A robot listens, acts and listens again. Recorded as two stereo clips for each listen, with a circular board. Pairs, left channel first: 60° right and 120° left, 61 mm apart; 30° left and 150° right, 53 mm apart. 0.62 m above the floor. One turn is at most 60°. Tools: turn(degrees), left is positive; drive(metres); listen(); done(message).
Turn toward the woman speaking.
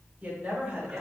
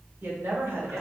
turn(degrees=-60)
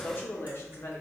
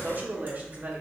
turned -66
turn(degrees=-60)
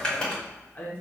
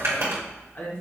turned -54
turn(degrees=-10)
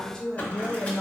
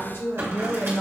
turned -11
turn(degrees=20)
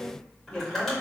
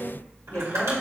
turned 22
turn(degrees=10)
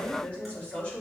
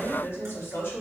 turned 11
done("Found it: a woman speaking, straight ahead, 1 to 2 m away.")